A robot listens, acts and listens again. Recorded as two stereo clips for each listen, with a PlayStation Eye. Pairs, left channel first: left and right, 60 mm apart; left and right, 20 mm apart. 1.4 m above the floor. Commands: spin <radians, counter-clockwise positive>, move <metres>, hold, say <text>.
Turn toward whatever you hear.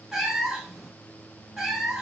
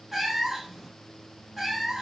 spin -0.52
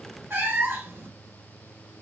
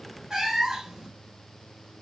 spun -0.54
spin -2.44
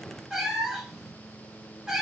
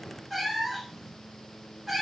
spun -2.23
spin -0.17
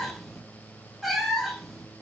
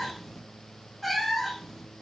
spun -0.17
say Facing the cat meowing.